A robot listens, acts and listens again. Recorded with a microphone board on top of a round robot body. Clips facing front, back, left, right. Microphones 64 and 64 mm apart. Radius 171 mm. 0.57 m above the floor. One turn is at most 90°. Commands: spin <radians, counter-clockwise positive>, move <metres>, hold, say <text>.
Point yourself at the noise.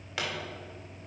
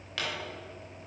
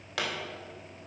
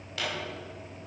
spin 1.31
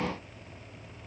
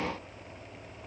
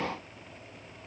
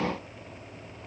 say I heard a pop from this way, but can't make it out now.